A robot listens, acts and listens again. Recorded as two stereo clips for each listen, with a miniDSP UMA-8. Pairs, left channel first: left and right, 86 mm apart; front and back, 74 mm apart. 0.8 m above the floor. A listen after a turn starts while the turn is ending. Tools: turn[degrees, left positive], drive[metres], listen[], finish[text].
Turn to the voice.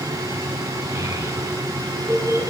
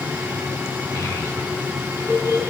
Thought: The child speaking: 45° right.
Action: turn[-45]
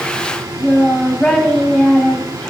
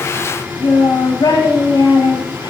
Thought: The child speaking is now 10° left.
Action: turn[10]
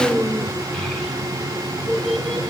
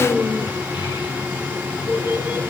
Action: finish[Facing the child speaking, 1 to 2 m away.]